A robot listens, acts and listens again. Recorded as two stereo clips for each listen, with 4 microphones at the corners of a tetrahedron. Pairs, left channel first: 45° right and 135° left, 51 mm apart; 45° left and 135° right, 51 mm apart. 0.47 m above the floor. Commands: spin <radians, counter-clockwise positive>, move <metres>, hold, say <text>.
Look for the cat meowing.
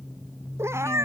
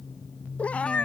spin 1.92
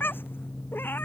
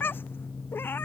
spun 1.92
say Found it: a cat meowing, straight ahead.